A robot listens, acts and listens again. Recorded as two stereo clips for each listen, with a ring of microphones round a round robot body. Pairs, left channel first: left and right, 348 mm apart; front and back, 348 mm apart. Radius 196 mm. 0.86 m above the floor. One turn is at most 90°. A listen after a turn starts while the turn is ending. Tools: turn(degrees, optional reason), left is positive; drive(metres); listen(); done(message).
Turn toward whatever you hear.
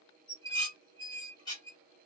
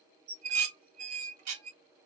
turn(degrees=90, reason="The dishes clattering: 170° left.")
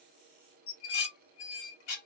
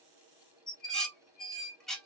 turn(degrees=90, reason="The dishes clattering is now 90° left.")
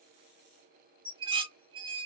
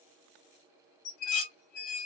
turn(degrees=-15, reason="The dishes clattering is now 15° right.")
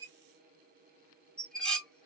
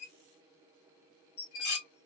done("Facing the dishes clattering, 1 to 2 m away.")